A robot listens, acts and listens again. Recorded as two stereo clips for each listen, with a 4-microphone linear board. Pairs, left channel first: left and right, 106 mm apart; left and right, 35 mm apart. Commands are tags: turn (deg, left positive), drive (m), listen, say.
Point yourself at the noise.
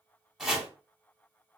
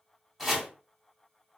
<turn deg="-30"/>
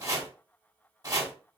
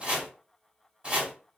<turn deg="-145"/>
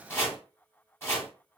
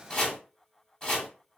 <turn deg="25"/>
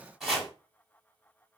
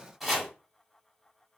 <say>Found it: chopping, straight ahead.</say>